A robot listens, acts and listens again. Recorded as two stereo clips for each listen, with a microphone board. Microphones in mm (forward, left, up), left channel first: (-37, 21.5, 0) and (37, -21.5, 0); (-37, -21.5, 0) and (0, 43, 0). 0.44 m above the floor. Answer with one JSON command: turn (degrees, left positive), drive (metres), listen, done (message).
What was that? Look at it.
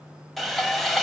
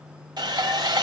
{"turn": 60}
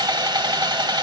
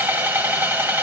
{"done": "Found it: sawing, straight ahead."}